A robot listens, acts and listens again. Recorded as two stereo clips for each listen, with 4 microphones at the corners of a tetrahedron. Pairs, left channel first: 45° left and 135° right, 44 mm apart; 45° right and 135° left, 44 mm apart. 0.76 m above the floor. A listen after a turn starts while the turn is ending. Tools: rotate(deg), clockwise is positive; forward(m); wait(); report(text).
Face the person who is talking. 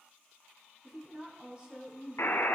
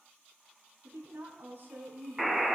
rotate(-160)
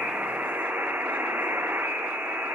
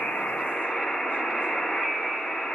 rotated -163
wait()
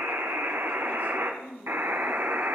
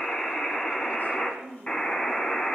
report("Found it: a woman speaking, straight ahead.")